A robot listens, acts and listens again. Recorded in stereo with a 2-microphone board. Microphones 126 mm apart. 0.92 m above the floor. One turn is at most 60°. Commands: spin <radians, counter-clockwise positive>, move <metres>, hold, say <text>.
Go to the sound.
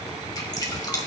spin 0.61
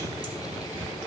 hold
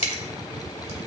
spin 1.05
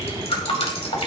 spin 1.05
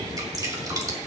spin -0.52
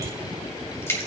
spin 0.44
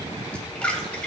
spin 0.17
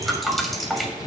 move 1.0
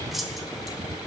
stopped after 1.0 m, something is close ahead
say I am next to the dripping.